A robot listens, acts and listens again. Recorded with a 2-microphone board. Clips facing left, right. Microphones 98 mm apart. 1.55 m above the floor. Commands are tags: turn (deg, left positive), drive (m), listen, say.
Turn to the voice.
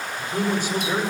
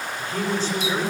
<turn deg="30"/>
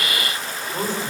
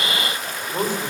<turn deg="-15"/>
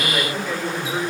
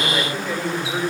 <say>Facing the man speaking, over 4 m away.</say>